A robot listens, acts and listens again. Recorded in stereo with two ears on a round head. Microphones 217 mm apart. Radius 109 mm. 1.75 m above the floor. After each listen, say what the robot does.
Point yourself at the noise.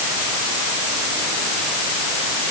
Keep listening.
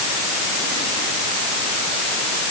Keep listening.
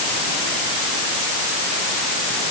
I can't make out anything.